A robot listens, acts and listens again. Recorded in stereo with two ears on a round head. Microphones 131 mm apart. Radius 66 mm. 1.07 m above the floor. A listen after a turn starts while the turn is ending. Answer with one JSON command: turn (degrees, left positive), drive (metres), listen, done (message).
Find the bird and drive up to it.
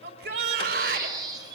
{"turn": -25}
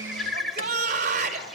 {"drive": 1.0}
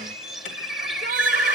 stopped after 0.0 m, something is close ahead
{"done": "Blocked. The bird is further on, straight ahead."}